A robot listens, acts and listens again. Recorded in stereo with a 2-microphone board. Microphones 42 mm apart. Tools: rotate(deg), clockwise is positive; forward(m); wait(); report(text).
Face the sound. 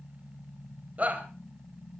rotate(40)
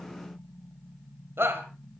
rotate(105)
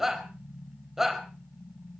rotate(10)
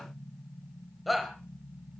report("Found it: a shout, straight ahead.")